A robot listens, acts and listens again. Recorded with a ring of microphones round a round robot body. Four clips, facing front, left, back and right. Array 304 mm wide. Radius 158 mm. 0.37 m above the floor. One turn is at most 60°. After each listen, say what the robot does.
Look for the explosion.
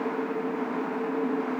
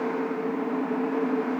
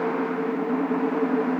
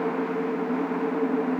Keep listening.
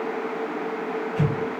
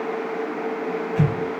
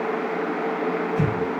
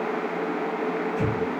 Turn 60° left.
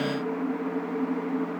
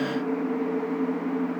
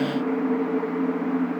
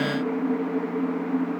Turn 40° left.
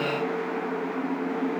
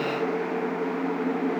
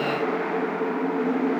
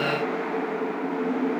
I heard an explosion from this way, but can't make it out now.